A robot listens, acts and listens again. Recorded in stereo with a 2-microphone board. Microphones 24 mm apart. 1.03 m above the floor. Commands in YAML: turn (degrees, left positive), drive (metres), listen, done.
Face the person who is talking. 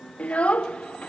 turn: 60
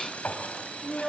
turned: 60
done: "Facing the child speaking."